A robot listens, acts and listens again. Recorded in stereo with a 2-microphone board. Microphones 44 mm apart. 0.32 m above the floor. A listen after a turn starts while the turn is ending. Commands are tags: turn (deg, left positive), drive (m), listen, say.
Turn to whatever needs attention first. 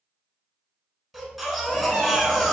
<turn deg="30"/>
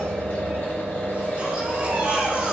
<turn deg="-30"/>
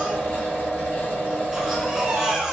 <turn deg="-15"/>
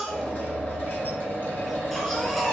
<say>Facing the baby crying, 1 to 2 m away.</say>